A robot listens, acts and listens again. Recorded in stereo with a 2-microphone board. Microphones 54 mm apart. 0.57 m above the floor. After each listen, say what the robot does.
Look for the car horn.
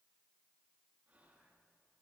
Keep listening.
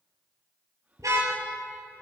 Turn 90° right.
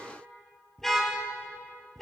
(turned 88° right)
Found it: a car horn, straight ahead.